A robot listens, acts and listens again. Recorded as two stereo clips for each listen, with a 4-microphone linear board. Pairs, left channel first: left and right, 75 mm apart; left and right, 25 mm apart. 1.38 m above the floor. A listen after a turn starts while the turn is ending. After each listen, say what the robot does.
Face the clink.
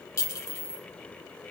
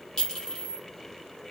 Turn 40° left.
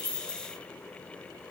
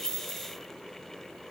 Keep listening.
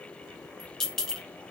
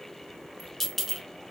Facing the clink.